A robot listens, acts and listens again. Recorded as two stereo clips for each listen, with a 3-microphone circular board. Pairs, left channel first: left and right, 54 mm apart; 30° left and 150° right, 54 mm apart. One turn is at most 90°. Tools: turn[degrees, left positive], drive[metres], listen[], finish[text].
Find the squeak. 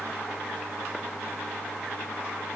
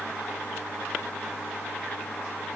Action: listen[]
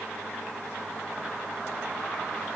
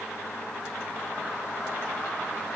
Action: listen[]
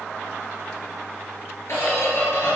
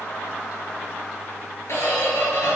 Thought: The squeak: 60° left.
Action: turn[60]
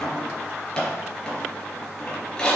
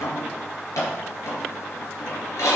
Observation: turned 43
Thought: The squeak is now 15° left.
Action: turn[15]
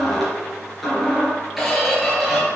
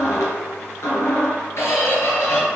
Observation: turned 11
Action: finish[Found it: a squeak, straight ahead, 2 to 4 m away.]